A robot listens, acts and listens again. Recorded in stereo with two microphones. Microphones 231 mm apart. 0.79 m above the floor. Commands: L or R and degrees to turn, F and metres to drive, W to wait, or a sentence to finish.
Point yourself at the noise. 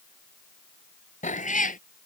L35
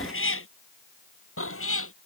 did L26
L110
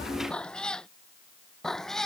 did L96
Facing the cat meowing.